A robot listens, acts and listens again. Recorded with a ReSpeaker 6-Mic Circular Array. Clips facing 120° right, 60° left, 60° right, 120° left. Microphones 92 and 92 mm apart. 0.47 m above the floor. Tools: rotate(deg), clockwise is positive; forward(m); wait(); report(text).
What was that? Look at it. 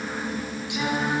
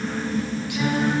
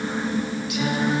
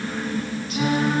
rotate(-170)
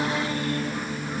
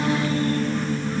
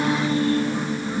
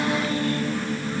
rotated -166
wait()
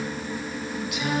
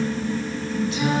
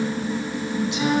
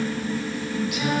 report("Facing the singing, 2 to 4 m away.")